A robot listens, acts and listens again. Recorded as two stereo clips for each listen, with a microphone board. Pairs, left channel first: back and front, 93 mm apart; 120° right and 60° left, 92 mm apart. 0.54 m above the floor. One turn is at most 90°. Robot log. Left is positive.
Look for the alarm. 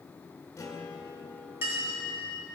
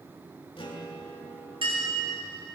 cmd idle
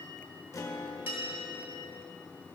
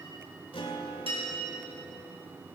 cmd idle
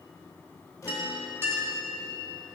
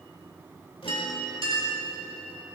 end: I can't make out an alarm to turn to.